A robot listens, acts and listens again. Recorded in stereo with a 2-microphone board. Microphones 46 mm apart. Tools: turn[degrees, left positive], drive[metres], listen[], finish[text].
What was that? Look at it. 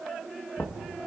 Action: turn[90]
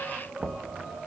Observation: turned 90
Action: finish[Facing the knocking.]